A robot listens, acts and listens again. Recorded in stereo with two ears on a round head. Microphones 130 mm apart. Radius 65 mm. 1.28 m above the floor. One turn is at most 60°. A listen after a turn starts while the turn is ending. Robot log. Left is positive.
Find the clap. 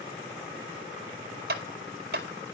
cmd yaw -60
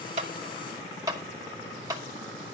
note: So it is at 25° right.
cmd yaw -25
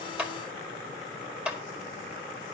end: Found it: a clap, straight ahead.